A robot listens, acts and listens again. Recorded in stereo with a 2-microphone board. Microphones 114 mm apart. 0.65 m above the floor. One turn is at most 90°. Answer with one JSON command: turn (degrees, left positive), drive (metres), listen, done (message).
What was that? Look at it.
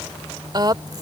{"turn": -40}
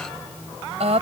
{"turn": -90}
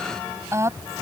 {"turn": -25}
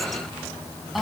{"done": "Facing the woman speaking."}